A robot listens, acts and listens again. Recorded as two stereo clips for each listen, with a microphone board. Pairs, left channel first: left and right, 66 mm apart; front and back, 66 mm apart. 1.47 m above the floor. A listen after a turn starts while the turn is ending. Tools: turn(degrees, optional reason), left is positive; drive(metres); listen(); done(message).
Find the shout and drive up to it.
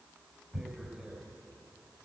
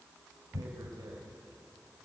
listen()
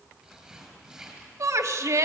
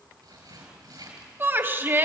turn(degrees=-125, reason="The shout: 125° right.")
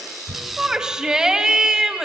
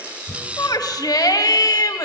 turn(degrees=-10, reason="The shout is now 10° right.")
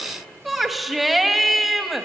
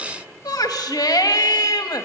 drive(metres=1.0)
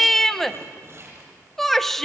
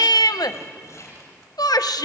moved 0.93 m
drive(metres=1.0)
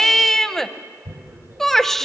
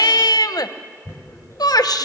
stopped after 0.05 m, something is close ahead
done("Arrived at the shout, straight ahead.")